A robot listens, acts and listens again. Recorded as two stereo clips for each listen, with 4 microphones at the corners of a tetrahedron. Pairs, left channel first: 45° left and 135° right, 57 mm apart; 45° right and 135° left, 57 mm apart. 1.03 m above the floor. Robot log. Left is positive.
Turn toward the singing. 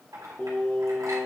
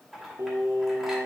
note: The singing: 110° left.
cmd yaw +110
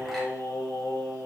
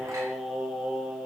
note: The singing is now 60° left.
cmd yaw +60
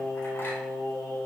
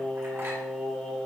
note: The singing is now 40° left.
cmd yaw +40
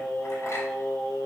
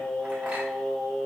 note: The singing is now 30° left.
cmd yaw +30
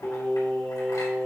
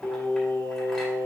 end: Facing the singing.